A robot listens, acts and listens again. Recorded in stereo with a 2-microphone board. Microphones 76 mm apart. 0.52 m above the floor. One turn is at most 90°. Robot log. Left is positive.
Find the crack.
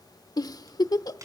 note: The crack: about 45° right or 135° right.
cmd yaw -45
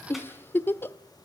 cmd idle
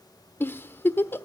end: I heard a crack, but can't make it out now. It was about straight ahead or 90° right.